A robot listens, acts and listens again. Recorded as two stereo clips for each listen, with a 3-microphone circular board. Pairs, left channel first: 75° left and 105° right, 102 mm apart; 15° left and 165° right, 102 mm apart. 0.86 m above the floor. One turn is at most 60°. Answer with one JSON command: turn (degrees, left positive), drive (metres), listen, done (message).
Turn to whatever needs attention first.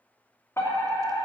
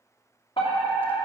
{"turn": 15}
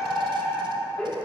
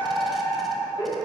{"done": "Facing the fire alarm."}